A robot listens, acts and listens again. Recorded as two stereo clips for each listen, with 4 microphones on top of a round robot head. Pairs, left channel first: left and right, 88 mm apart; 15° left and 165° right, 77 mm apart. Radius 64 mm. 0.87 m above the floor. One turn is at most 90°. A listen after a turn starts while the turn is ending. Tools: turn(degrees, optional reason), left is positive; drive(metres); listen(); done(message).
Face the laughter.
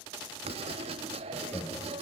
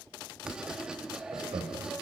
turn(degrees=90, reason="The laughter: 165° left.")
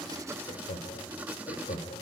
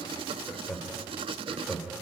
turn(degrees=90, reason="The laughter is now 105° left.")
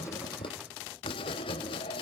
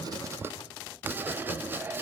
turn(degrees=15, reason="Nothing new. It was at 15° left.")
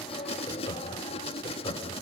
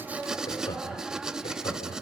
turn(degrees=55, reason="The laughter is now 55° left.")
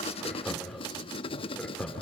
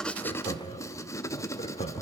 turn(degrees=10, reason="The laughter is now 10° left.")
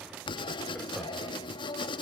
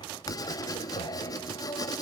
done("Found it: laughter, straight ahead.")